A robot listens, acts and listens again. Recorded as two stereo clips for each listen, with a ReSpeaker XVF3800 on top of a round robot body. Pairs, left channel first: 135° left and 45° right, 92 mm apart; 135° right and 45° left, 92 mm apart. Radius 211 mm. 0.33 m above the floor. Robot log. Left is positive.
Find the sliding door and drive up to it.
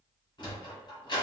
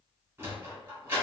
note: The sliding door: 105° left.
cmd yaw +105
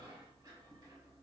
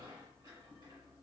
cmd idle
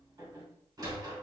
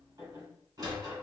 cmd fwd 1.0
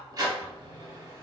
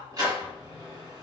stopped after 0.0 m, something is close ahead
end: Something is in my way. I am facing the sliding door but have not reached it.